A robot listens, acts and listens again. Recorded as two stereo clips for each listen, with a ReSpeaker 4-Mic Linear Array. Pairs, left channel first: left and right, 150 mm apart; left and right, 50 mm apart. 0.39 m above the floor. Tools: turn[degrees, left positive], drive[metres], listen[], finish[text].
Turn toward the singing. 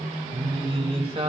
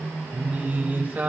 Thought: The singing: about 45° right or 135° right.
Action: turn[-45]
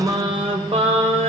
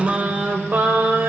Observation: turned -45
Thought: The singing: about 50° right or 130° right.
Action: turn[-50]
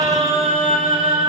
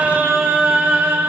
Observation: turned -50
Thought: So it is at 55° right.
Action: turn[-55]
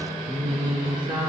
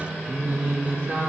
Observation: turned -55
Thought: The singing is now 40° right.
Action: turn[-40]
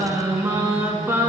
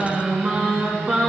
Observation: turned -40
Thought: The singing is now 15° right.
Action: turn[-15]
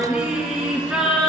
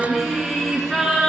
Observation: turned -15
Action: finish[Facing the singing, 2 to 4 m away.]